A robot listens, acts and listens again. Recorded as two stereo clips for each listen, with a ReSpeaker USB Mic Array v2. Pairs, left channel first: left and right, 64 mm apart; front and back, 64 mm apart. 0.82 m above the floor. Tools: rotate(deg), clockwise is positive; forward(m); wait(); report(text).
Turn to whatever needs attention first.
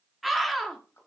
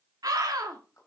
rotate(-180)
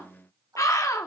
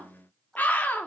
rotate(-60)
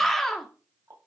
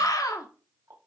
report("Found it: a scream, straight ahead, 1 to 2 m away.")